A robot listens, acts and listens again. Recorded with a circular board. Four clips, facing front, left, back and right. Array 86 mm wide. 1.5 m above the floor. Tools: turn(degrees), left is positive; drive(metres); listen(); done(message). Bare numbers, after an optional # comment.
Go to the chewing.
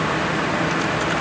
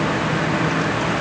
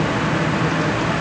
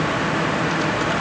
listen()
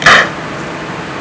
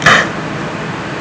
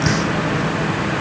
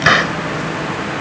listen()
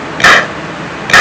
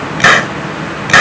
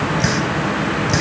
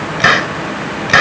done("I can't make out chewing to turn to.")